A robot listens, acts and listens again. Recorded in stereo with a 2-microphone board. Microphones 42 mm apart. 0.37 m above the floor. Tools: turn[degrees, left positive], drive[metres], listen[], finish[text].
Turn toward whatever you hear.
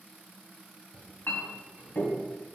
Thought: The clink: about 65° left or 115° left.
Action: turn[65]
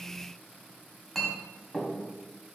Action: finish[Facing the clink, 1 to 2 m away.]